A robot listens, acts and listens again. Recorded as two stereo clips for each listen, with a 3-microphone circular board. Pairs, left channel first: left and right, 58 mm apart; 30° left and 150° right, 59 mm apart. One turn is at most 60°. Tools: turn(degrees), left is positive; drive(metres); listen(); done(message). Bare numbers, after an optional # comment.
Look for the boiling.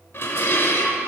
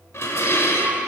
listen()
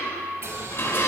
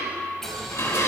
# The boiling: 55° right.
turn(-55)
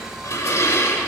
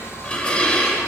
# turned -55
# The boiling is now 10° right.
turn(-10)
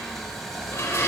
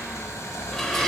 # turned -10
done("Facing the boiling.")